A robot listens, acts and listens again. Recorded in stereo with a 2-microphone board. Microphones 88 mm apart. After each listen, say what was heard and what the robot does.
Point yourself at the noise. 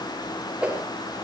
Turn 30° right.
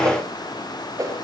So it is at 140° right. Turn 140° right.
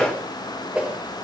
The whoosh is now 15° right. Turn 15° right.
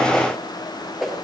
Facing the whoosh, over 4 m away.